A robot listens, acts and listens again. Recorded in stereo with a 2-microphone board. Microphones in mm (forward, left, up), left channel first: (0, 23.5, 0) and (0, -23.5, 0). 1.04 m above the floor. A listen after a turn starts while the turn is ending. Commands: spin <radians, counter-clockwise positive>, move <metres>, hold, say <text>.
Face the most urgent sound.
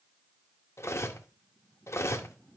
hold
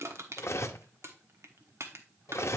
hold
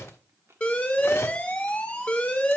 spin 0.44
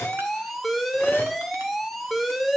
say Found it: an alarm, straight ahead.